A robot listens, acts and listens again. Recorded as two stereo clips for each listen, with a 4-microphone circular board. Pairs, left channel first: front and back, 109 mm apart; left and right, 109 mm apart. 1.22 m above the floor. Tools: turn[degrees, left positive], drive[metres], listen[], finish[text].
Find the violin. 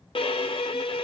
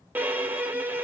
Thought: The violin: 20° right.
Action: turn[-20]
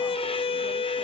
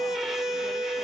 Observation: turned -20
Action: finish[Found it: a violin, straight ahead.]